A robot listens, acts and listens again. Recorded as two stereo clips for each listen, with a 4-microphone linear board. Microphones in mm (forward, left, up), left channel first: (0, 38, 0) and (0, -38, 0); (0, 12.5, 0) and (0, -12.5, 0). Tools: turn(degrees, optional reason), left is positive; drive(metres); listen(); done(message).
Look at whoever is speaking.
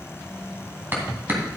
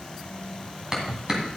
listen()
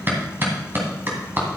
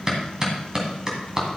listen()
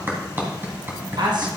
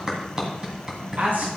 turn(degrees=-70, reason="The man speaking: about 70° right or 110° right.")
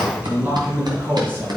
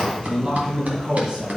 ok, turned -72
turn(degrees=-25, reason="So it is at 25° right.")
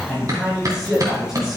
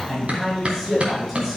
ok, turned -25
done("Found it: a man speaking, straight ahead.")